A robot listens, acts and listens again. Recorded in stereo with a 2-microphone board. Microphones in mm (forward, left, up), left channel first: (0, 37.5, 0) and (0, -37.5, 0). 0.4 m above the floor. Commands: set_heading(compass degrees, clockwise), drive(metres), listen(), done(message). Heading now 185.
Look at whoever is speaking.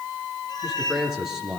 set_heading(215)
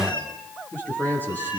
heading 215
set_heading(190)
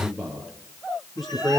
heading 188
done("Found it: a man speaking, straight ahead, over 4 m away.")